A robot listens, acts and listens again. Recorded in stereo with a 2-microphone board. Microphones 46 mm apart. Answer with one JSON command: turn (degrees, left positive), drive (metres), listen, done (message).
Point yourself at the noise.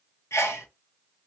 {"turn": 90}
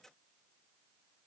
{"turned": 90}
{"done": "I heard a sneeze from this way, but can't make it out now."}